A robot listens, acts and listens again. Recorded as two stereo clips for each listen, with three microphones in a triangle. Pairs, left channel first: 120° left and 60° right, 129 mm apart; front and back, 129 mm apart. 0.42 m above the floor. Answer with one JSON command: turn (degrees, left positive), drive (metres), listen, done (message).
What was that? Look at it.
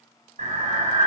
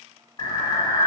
{"turn": -50}
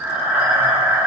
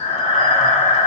{"turn": 10}
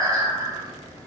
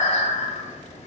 {"done": "Found it: breathing, straight ahead."}